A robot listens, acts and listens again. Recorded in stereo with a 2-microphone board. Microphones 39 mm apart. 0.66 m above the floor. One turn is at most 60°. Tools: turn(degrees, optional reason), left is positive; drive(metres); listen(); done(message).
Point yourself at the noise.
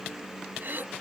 turn(degrees=-60, reason="The throat clearing: about 60° right or 120° right.")
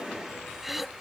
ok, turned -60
done("Facing the throat clearing.")